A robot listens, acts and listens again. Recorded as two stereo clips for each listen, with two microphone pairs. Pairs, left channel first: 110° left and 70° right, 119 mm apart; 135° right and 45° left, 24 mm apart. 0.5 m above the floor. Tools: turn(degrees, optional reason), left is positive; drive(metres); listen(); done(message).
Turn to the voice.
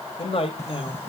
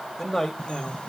turn(degrees=140, reason="The man speaking: 140° left.")
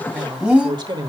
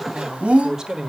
turn(degrees=-25, reason="The man speaking is now 25° right.")
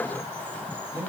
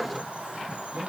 done("Found it: a man speaking, straight ahead.")